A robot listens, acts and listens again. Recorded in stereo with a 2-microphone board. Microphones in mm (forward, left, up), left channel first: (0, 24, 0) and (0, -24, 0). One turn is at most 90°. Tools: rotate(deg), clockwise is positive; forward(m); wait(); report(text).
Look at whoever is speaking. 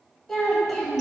rotate(-30)
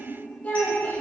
rotate(-90)
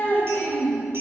rotate(-75)
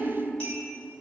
rotate(20)
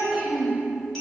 report("Found it: a child speaking, straight ahead.")